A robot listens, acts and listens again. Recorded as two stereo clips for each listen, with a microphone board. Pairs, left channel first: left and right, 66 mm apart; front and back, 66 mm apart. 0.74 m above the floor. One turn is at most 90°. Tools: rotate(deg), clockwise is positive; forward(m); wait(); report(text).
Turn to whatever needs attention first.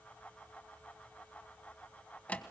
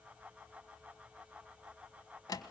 wait()
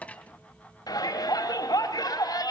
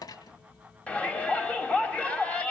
rotate(-75)
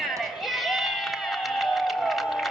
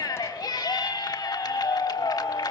report("Found it: a shout, straight ahead.")